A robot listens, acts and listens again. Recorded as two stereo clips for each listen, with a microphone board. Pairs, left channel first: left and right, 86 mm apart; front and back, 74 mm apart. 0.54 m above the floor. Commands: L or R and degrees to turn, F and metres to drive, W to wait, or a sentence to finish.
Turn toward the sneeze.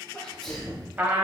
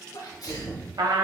Found it: a sneeze, straight ahead, 1 to 2 m away.